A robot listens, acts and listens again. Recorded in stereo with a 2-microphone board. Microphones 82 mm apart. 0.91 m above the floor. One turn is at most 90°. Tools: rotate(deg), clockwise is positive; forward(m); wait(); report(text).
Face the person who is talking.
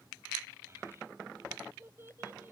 rotate(30)
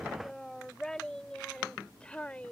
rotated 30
rotate(-15)
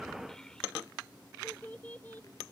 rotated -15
rotate(-25)
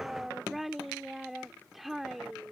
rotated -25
report("Found it: a child speaking, straight ahead.")